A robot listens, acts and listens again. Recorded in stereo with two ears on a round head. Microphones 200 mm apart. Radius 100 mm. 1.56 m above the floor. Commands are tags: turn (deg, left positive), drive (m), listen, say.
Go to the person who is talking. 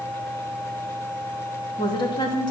<turn deg="20"/>
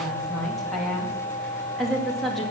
<drive m="1.0"/>
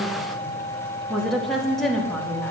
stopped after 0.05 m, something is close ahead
<say>Blocked. The woman speaking is further on, straight ahead.</say>